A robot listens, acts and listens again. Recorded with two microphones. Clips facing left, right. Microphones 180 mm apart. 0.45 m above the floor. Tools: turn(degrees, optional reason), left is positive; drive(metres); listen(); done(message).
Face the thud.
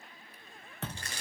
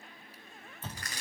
turn(degrees=90)
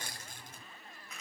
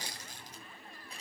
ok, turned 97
done("Facing where the thud came from. I can't hear it now.")